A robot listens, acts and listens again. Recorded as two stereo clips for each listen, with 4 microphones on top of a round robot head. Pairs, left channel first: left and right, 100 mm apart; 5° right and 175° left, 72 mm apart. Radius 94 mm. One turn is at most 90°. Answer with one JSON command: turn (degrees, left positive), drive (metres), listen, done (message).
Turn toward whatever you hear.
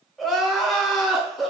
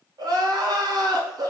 {"turn": 90}
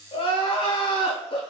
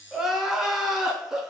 {"turn": 90}
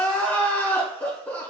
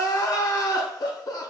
{"turn": 20}
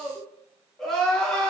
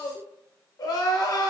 {"done": "Found it: crying, straight ahead, under 1 m away."}